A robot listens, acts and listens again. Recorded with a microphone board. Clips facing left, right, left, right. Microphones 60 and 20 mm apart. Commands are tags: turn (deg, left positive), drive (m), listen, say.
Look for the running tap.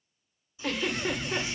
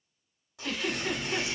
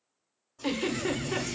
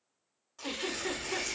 <turn deg="-65"/>
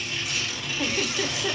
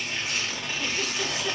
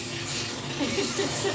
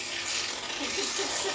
<listen/>
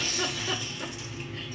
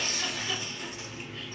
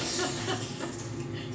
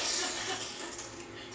<say>Found it: a running tap, straight ahead.</say>